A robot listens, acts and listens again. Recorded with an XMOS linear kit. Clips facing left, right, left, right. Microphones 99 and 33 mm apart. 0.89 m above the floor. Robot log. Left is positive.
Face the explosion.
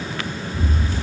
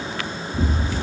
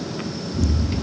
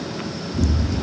note: The explosion: about 50° right or 130° right.
cmd yaw -50
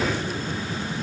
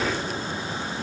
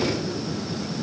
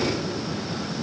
cmd idle
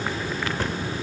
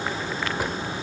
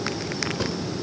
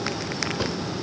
end: I heard an explosion, but can't make it out now. It was about straight ahead or 80° right.